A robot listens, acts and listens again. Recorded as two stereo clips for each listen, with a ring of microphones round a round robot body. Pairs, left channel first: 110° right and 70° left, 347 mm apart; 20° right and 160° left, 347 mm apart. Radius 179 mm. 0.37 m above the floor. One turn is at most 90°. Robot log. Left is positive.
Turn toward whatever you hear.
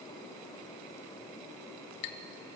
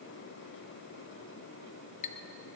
note: The clink: 90° right.
cmd yaw -90
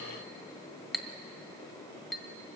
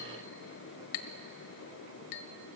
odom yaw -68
note: The clink is now 25° right.
cmd yaw -25
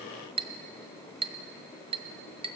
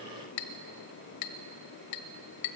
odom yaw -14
end: Facing the clink.